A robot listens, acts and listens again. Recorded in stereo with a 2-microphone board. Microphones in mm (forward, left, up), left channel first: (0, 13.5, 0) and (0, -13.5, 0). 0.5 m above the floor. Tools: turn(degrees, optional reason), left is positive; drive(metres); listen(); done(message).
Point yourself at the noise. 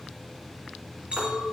turn(degrees=-55, reason="The clink: about 55° right or 125° right.")
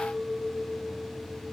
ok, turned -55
turn(degrees=-70, reason="So it is at 70° right.")
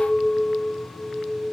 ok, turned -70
turn(degrees=-25, reason="The clink is now 25° right.")
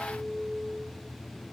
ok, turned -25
turn(degrees=-10, reason="The clink is now 10° right.")
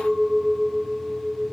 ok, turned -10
done("Facing the clink, over 4 m away.")